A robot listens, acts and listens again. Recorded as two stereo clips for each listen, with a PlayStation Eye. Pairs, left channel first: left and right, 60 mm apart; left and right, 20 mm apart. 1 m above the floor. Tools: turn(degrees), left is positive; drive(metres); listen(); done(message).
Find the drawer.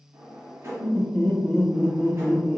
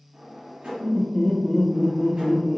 turn(degrees=-45)
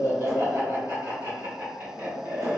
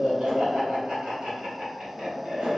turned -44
listen()
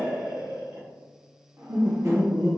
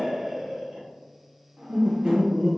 turn(degrees=-80)
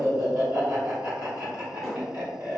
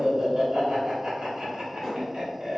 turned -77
done("Found it: a drawer, straight ahead, 1 to 2 m away.")